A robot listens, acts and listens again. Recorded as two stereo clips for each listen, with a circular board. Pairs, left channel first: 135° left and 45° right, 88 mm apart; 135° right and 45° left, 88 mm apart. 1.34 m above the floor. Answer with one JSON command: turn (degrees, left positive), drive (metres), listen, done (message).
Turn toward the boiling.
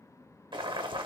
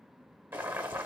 {"turn": -25}
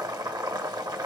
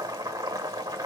{"done": "Found it: boiling, straight ahead, 1 to 2 m away."}